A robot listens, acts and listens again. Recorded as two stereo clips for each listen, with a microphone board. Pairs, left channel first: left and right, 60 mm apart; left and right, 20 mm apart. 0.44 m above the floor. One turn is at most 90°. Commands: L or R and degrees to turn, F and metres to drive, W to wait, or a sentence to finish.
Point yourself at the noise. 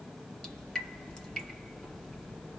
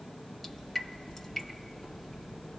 L30
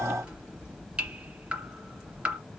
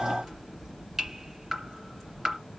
R15
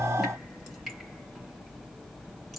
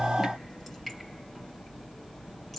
Facing the dripping, 2 to 4 m away.